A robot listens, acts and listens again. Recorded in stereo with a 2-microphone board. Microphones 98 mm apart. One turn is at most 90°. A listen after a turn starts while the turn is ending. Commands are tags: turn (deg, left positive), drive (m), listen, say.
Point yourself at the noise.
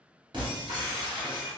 <turn deg="-50"/>
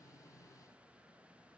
<listen/>
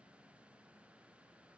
<say>I heard breaking glass, but can't make it out now. It was about straight ahead or 80° right.</say>